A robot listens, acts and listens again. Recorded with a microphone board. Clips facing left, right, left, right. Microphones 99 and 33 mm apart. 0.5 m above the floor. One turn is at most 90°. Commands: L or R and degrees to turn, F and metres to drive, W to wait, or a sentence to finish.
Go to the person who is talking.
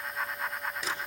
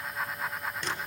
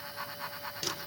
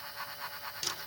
W
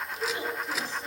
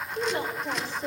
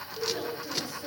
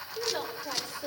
R70
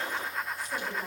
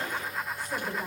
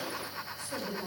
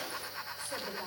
R35
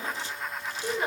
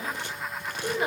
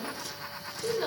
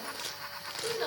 R10
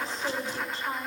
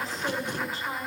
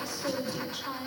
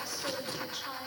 F1.0
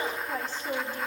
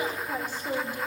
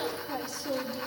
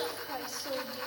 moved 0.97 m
R15
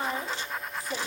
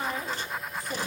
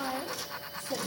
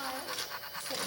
F1.0
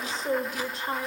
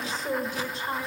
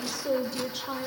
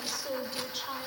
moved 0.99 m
F1.0
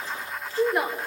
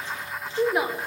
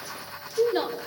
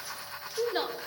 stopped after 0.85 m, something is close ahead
Arrived at the woman speaking, straight ahead.